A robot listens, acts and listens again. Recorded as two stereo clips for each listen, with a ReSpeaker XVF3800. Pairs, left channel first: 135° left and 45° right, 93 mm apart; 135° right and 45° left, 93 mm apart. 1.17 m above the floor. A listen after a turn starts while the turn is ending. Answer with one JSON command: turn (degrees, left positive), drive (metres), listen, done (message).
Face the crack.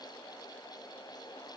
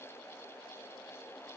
{"listen": true}
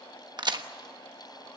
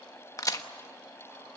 {"turn": -85}
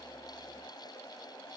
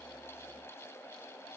{"done": "Facing where the crack came from. I can't hear it now."}